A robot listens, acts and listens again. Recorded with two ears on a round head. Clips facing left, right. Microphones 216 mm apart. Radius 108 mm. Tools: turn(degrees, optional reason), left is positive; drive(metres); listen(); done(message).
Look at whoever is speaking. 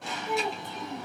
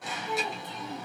turn(degrees=40, reason="The child speaking: about 40° left or 140° left.")
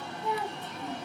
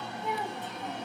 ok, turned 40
done("Found it: a child speaking, straight ahead, 1 to 2 m away.")